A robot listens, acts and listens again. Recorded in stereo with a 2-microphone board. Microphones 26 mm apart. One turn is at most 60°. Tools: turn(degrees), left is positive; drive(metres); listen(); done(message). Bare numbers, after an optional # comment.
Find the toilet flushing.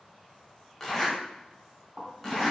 # The toilet flushing: about 50° right or 130° right.
turn(-50)
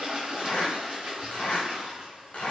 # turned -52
# So it is at 60° right.
turn(-60)
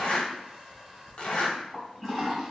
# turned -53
# The toilet flushing is now 10° right.
turn(-10)
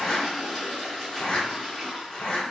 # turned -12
done("Found it: a toilet flushing, straight ahead, 1 to 2 m away.")